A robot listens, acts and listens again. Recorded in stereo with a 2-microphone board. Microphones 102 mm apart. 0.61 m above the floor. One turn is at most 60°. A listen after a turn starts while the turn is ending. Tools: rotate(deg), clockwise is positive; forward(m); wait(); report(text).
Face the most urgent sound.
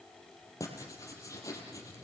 wait()
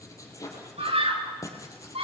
rotate(60)
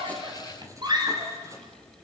rotate(45)
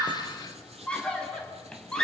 rotate(-10)
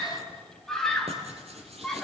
report("Facing the scream, over 4 m away.")